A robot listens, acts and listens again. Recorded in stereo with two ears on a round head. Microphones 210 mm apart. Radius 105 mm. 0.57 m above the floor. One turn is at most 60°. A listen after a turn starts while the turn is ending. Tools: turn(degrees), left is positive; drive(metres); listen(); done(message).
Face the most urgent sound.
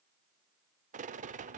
listen()
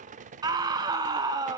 turn(degrees=-15)
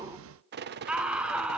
done("Facing the scream.")